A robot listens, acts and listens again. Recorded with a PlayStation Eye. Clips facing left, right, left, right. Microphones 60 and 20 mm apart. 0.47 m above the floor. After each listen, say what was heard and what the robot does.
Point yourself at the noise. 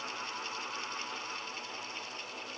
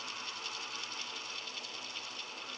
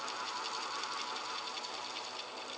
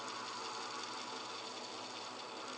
Keep listening.
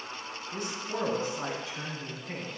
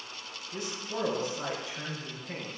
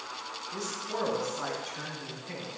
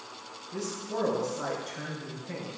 The man speaking: about 55° left or 125° left. Turn 55° left.
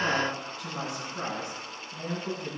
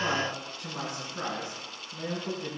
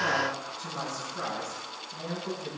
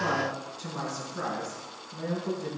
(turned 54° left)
Found it: a man speaking, straight ahead, over 4 m away.